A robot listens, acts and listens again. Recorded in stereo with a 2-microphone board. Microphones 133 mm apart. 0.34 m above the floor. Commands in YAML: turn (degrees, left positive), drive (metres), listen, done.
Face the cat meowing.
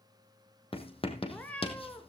turn: 30
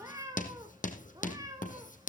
turn: -25
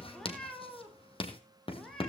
done: "Found it: a cat meowing, straight ahead, over 4 m away."